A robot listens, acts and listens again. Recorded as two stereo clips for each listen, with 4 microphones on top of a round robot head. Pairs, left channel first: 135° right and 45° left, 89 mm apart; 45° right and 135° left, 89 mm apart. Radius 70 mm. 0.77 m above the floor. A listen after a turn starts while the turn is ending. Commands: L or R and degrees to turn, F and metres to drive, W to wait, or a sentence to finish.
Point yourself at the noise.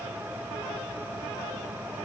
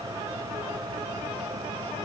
W
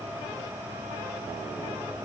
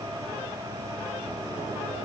W
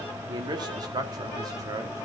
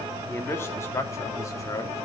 Found it: a man speaking, straight ahead, 2 to 4 m away.